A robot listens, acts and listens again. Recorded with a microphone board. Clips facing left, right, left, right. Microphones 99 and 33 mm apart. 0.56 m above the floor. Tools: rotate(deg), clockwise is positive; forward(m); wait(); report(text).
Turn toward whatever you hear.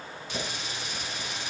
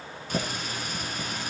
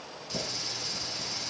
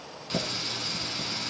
rotate(50)
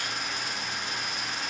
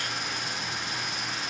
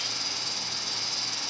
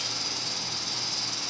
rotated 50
report("Facing the running tap, 2 to 4 m away.")